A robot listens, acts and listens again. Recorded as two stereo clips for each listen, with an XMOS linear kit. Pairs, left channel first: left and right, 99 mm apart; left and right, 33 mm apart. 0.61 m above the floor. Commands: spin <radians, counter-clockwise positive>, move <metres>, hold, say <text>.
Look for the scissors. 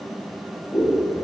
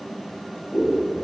spin 0.96
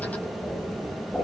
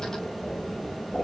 say Found it: scissors, straight ahead, 2 to 4 m away.